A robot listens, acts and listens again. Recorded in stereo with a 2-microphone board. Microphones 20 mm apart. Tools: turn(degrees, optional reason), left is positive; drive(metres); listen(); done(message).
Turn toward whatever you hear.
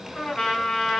turn(degrees=60, reason="The trumpet: about 60° left or 120° left.")
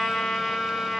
turn(degrees=60, reason="So it is at 60° left.")
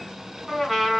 done("Facing the trumpet.")